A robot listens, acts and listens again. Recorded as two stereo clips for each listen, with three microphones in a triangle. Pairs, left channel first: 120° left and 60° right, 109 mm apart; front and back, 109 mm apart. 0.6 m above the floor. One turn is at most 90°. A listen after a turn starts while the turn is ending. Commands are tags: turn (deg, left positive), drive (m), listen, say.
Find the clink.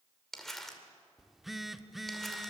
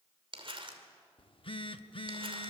<listen/>
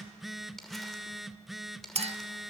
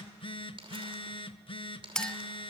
<turn deg="-80"/>
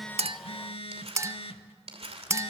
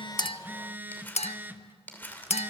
<say>Facing the clink, under 1 m away.</say>